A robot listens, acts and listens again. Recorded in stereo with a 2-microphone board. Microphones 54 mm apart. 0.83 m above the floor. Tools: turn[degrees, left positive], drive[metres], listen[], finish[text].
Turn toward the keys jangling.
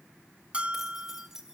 Action: turn[-30]
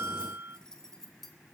Action: finish[Facing the keys jangling.]